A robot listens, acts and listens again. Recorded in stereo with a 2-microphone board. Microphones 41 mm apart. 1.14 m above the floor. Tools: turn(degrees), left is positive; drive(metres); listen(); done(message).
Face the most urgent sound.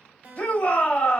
turn(degrees=30)
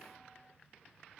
listen()
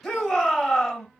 done("Facing the shout, 1 to 2 m away.")